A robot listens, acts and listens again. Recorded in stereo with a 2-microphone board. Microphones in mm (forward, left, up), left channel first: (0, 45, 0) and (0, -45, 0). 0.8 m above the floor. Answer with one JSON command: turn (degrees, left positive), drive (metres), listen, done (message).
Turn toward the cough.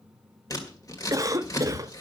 {"turn": -40}
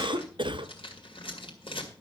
{"turn": -95}
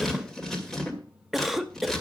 {"done": "Found it: a cough, straight ahead."}